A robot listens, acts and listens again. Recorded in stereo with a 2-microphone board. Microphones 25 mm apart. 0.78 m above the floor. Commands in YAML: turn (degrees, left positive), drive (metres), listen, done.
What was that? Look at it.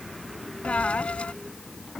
turn: 60
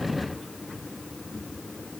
listen: true
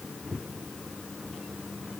done: "I heard a dropped coin, but can't make it out now. It was about straight ahead or 60° left."